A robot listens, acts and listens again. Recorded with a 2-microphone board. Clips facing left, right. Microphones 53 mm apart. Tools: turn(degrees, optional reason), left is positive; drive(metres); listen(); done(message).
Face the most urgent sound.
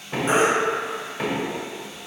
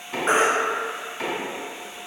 turn(degrees=-55, reason="The baby crying: about 55° right or 125° right.")
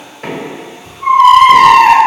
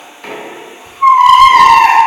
turn(degrees=-65, reason="So it is at 65° right.")
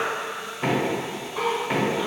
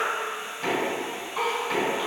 listen()
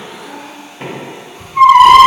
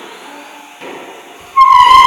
done("Facing the baby crying.")